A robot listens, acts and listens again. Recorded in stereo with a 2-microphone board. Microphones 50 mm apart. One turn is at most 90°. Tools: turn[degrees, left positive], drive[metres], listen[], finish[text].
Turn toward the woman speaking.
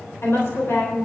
Thought: The woman speaking: about 55° left or 125° left.
Action: turn[55]
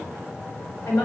Thought: So it is at 75° left.
Action: turn[75]
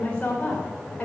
Thought: The woman speaking is now 25° left.
Action: turn[25]
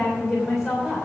Thought: The woman speaking is now 10° left.
Action: turn[10]
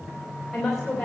Thought: The woman speaking is now 10° left.
Action: turn[10]
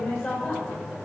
Action: finish[Facing the woman speaking.]